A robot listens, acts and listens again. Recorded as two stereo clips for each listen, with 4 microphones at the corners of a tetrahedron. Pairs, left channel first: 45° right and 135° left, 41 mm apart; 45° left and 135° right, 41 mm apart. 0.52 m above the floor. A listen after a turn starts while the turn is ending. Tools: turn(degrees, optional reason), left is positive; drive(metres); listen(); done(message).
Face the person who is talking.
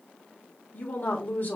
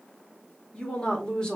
turn(degrees=-20, reason="The woman speaking: 20° right.")
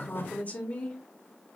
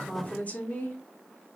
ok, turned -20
done("Found it: a woman speaking, straight ahead.")